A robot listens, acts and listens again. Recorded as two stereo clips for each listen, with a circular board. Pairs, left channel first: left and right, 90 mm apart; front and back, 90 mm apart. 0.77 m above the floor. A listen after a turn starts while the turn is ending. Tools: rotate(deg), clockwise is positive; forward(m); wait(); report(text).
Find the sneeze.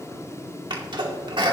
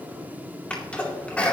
rotate(75)
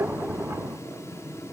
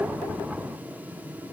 report("Facing where the sneeze came from. I can't hear it now.")